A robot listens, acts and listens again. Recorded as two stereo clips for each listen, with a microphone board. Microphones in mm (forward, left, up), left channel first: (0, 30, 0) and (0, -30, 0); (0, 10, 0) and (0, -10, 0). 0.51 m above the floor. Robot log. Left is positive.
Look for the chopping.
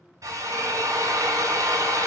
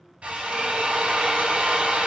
cmd idle
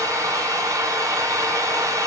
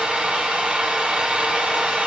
cmd idle
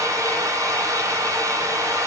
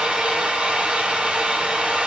end: I can't make out chopping, only a drill.